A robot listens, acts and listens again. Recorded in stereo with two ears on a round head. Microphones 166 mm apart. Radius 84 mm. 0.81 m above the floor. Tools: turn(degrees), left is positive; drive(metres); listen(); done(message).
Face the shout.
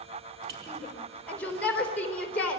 turn(degrees=30)
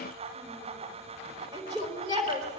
turn(degrees=-25)
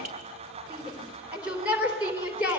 done("Found it: a shout, straight ahead.")